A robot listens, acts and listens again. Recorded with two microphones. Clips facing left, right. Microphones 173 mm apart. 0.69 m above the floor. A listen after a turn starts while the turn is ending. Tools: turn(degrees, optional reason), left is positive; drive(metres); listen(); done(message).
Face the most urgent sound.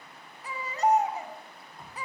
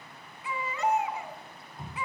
turn(degrees=45, reason="The baby crying: about 45° left or 135° left.")
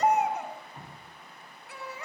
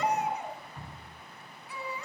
turn(degrees=95, reason="So it is at 95° left.")
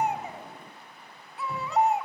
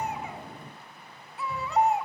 done("Facing the baby crying.")